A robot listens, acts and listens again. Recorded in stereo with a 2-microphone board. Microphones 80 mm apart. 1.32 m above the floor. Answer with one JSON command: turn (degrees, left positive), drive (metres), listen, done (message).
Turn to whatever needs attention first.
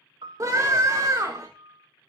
{"turn": -45}
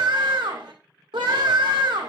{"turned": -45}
{"turn": -95}
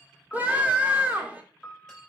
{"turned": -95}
{"turn": -20}
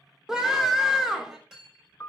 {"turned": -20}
{"done": "Facing the scream."}